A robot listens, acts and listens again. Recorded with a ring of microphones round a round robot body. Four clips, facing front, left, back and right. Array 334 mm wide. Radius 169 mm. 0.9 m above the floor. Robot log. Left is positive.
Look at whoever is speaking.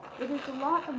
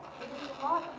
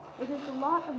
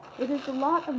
note: The woman speaking: 80° right.
cmd yaw -80
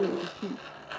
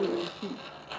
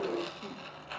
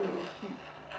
cmd idle
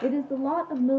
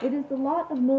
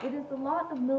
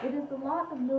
note: The woman speaking is now 60° left.
cmd yaw +60
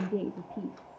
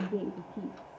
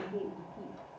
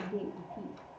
note: The woman speaking is now 35° left.
cmd yaw +35
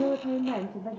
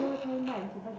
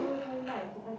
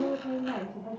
end: Facing the woman speaking, 2 to 4 m away.